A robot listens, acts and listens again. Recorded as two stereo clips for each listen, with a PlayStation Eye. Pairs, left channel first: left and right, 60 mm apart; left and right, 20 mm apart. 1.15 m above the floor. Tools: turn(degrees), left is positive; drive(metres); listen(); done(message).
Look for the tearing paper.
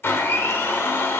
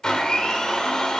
listen()
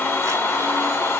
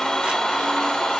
listen()
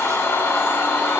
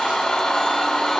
done("I can't make out tearing paper, only a blender.")